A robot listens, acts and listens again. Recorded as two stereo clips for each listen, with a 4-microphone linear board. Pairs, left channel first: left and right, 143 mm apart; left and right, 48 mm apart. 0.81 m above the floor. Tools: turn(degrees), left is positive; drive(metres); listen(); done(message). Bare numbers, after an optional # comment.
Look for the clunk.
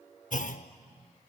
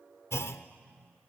# The clunk: about 65° left or 115° left.
turn(65)
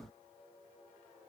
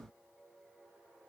listen()
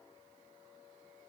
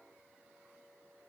done("I heard a clunk, but can't make it out now. It was about straight ahead or 50° left.")